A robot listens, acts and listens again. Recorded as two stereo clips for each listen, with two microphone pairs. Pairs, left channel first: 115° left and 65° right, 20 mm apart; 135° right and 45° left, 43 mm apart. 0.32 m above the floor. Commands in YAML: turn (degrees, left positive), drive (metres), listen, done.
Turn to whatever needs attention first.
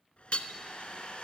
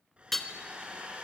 listen: true
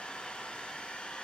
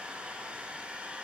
listen: true
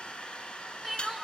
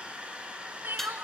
turn: 10
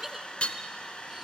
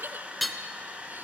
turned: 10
done: "Facing the crying."